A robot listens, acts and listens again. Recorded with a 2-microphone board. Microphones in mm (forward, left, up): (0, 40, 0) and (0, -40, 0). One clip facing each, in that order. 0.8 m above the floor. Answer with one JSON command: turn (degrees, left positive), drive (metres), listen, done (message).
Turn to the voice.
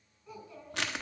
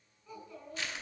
{"turn": 30}
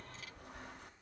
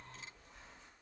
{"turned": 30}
{"listen": true}
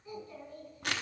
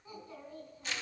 {"turn": -25}
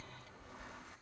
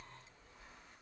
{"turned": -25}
{"listen": true}
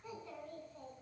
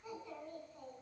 {"done": "Found it: a child speaking, straight ahead, over 4 m away."}